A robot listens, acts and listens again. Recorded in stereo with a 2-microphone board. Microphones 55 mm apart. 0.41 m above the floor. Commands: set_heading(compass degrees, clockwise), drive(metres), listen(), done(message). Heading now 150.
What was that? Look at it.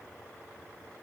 listen()
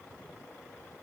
listen()
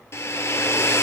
set_heading(95)
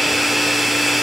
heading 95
done("Found it: a hair dryer, straight ahead, 1 to 2 m away.")